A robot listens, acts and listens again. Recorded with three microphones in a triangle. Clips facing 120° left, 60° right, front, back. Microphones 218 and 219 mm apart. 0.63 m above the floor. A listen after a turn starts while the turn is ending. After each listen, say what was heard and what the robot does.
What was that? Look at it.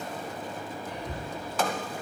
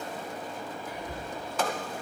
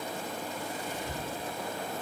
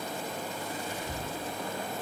The whispering: 20° left. Turn 20° left.
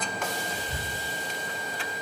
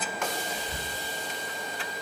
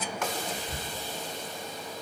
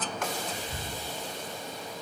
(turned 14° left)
The whispering is now 10° left. Turn 10° left.
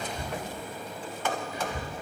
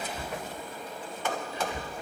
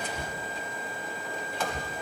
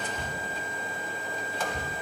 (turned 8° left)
Found it: whispering, straight ahead.